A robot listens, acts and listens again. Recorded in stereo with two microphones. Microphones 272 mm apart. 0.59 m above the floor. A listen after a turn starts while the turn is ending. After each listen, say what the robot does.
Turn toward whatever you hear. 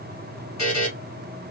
Turn 75° left.
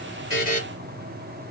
Turn 30° left.
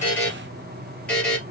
Found it: a buzzer, straight ahead, 2 to 4 m away.